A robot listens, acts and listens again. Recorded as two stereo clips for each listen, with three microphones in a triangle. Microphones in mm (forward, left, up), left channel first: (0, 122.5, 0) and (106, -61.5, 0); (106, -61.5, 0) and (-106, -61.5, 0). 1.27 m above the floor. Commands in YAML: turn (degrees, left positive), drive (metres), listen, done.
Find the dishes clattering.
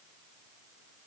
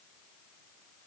listen: true
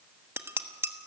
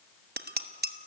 turn: -140
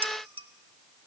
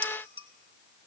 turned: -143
listen: true
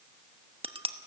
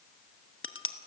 done: "Found it: dishes clattering, straight ahead, 1 to 2 m away."